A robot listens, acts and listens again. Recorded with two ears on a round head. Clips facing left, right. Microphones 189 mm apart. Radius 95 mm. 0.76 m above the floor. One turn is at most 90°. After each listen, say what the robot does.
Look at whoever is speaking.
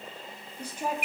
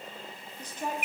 Turn 30° left.
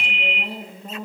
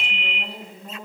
Turn 90° left.
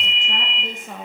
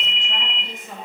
Turn 55° left.
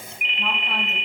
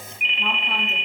Keep listening.
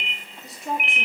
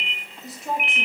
Facing the woman speaking, under 1 m away.